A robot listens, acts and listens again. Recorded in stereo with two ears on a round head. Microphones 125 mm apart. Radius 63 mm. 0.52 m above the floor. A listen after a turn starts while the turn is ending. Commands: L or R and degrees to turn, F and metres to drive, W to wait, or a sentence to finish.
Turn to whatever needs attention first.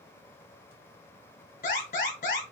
L60
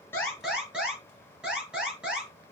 Facing the alarm.